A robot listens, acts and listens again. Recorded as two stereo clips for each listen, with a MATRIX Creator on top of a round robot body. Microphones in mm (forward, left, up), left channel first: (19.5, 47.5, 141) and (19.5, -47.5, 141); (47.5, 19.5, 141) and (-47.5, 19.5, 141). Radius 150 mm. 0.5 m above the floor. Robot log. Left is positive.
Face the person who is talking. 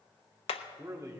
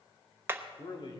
note: The man speaking: 35° right.
cmd yaw -35
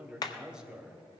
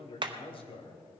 note: The man speaking is now 10° right.
cmd yaw -10
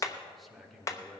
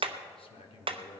end: Facing the man speaking, 2 to 4 m away.